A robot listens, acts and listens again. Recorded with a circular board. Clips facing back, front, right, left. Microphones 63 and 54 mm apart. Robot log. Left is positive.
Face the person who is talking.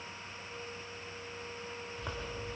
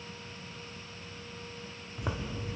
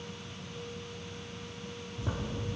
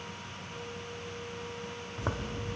cmd idle
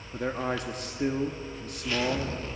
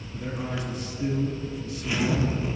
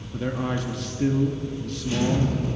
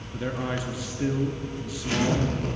note: The man speaking: 175° left.
cmd yaw +175
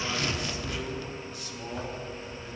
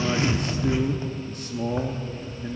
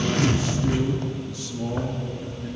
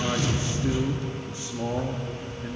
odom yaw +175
note: The man speaking is now 35° left.
cmd yaw +35
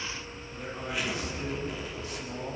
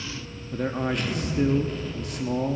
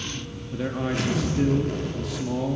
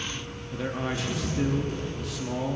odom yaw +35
end: Facing the man speaking.